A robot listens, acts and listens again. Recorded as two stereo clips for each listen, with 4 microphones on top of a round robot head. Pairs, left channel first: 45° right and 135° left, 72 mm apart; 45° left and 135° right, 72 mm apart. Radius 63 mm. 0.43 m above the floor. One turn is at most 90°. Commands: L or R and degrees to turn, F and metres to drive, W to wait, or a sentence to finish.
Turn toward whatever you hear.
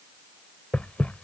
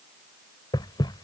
L25
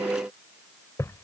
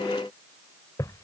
Found it: knocking, straight ahead.